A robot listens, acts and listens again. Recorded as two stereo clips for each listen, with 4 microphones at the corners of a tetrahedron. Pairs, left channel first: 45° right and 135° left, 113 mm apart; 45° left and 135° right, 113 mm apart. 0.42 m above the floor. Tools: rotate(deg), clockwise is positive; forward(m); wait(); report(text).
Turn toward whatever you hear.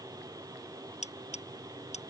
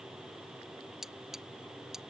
rotate(50)
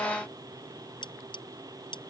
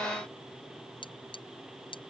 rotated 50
report("Facing the cutlery clinking.")